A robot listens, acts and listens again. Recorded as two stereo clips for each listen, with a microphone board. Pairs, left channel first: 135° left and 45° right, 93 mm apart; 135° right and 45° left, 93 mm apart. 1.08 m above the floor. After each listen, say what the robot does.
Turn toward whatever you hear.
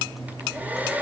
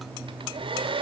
Turn 25° left.
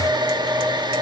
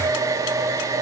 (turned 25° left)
Turn 10° right.
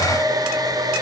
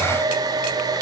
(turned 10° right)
Found it: a hair dryer, straight ahead.